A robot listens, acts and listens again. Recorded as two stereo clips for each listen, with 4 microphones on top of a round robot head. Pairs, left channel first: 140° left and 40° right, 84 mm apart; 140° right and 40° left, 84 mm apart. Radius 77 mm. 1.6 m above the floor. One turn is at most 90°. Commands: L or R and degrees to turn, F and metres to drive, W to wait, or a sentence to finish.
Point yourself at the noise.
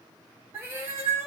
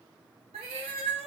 L25
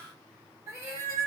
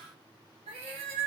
L20
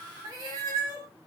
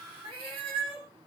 L10
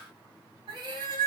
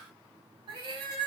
Facing the cat meowing.